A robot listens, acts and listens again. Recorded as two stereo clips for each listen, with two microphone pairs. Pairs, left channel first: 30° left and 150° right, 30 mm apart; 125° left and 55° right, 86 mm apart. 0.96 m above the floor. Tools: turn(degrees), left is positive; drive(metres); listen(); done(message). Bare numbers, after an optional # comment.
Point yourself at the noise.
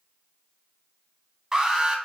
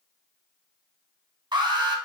# The alarm: 80° right.
turn(-80)
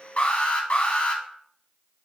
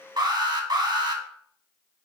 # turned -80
# The alarm is now 10° right.
turn(-10)
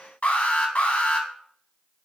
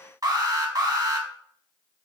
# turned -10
done("Found it: an alarm, straight ahead.")